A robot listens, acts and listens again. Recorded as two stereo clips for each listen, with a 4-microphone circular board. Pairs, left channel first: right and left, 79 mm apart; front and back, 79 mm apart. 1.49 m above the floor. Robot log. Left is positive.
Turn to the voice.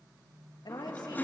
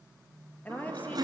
note: The woman speaking: 70° right.
cmd yaw -70
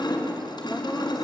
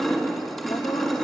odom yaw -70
cmd idle
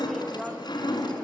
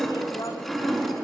cmd idle
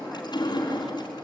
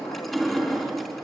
end: Facing where the woman speaking came from. I can't hear it now.